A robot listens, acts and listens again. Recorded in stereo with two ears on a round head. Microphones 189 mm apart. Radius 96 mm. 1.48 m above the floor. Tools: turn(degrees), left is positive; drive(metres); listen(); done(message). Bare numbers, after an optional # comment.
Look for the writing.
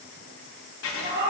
# The writing: about 60° left or 120° left.
turn(60)
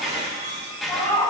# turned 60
done("Found it: writing, straight ahead, 1 to 2 m away.")